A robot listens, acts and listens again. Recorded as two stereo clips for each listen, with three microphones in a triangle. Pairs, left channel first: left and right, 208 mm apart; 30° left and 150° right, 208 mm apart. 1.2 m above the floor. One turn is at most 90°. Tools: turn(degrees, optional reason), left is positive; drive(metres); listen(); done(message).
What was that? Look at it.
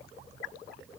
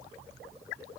listen()
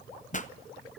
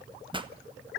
turn(degrees=90, reason="The pop: 145° left.")
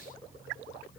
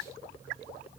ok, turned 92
turn(degrees=55, reason="Nothing new. It was at 55° left.")
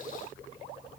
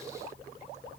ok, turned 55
done("I heard a pop from this way, but can't make it out now.")